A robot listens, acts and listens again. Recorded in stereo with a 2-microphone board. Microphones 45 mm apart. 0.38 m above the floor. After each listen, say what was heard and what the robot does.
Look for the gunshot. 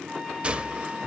The gunshot: about 25° right or 155° right. Turn 25° right.
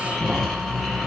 Keep listening.
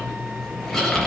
I heard a gunshot, but can't make it out now. It was about straight ahead or 130° right.